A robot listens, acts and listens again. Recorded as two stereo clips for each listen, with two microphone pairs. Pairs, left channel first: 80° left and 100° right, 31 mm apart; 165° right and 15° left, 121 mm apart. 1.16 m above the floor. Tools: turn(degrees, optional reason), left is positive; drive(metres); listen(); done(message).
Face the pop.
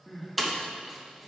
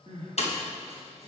turn(degrees=165, reason="The pop: 165° left.")
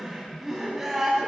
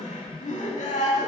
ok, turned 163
done("Facing where the pop came from. I can't hear it now.")